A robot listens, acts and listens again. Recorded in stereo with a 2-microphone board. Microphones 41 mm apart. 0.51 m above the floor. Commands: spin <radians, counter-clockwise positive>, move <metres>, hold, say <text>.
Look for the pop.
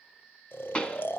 spin 0.44
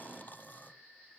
hold
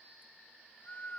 say I heard a pop, but can't make it out now. It was about straight ahead or 130° left.